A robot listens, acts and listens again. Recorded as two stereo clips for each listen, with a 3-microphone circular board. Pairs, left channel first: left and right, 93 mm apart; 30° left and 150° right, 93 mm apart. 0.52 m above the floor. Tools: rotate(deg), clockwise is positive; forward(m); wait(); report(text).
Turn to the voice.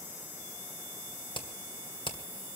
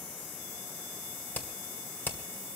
wait()
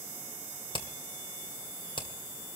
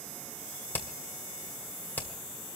wait()
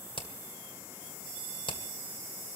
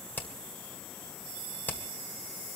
report("I can't make out anyone speaking, only hammering.")